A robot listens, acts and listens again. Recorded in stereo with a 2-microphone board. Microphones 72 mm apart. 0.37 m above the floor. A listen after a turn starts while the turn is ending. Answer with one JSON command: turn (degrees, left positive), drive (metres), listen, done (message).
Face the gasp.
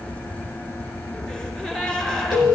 {"turn": 30}
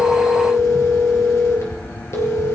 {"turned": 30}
{"listen": true}
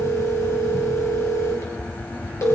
{"done": "I heard a gasp, but can't make it out now. It was about 20° right or 140° left."}